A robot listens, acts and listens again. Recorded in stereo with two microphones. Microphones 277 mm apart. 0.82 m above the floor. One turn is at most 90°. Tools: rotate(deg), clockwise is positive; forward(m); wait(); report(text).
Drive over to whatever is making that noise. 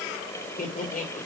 rotate(-30)
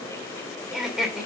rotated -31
forward(1.0)
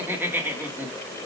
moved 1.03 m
rotate(10)
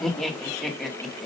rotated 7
forward(1.0)
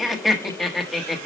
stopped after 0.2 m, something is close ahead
report("I am next to the laughter.")